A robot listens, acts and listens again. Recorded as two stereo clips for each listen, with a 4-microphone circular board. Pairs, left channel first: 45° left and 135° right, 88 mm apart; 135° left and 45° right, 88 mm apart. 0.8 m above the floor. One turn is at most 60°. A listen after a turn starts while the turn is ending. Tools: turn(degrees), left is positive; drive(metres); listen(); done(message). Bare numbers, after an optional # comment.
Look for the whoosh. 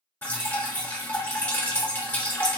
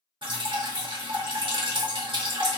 listen()
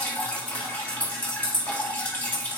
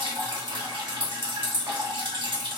listen()
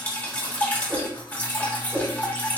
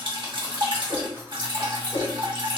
# The whoosh: 150° left.
turn(60)
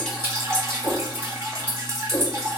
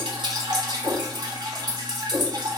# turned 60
# The whoosh is now 95° left.
turn(60)
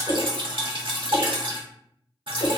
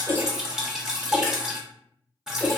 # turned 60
# The whoosh is now 50° left.
turn(50)
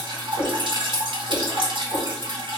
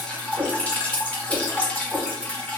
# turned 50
# The whoosh is now 25° left.
turn(25)
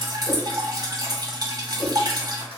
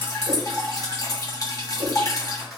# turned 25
done("Facing the whoosh.")